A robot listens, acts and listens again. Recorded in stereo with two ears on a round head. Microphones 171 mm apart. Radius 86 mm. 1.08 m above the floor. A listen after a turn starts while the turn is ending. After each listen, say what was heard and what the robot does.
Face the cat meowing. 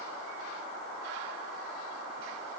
Keep listening.
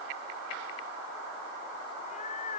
The cat meowing: about 40° left or 140° left. Turn 40° left.
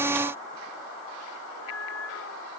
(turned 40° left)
So it is at 100° left. Turn 100° left.
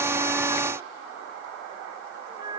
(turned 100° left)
The cat meowing is now 20° right. Turn 20° right.
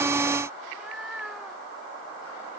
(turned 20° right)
Found it: a cat meowing, straight ahead.